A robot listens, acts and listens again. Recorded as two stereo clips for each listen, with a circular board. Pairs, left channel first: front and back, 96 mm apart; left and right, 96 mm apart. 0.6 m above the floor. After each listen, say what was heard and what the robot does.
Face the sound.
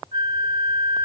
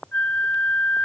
The flute: 160° left. Turn 160° left.
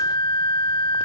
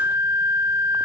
The flute is now 30° right. Turn 30° right.
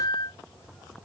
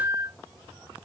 The flute is now 35° right. Turn 35° right.
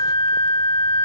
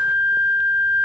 The flute is now 20° right. Turn 20° right.
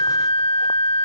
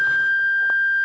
Found it: a flute, straight ahead.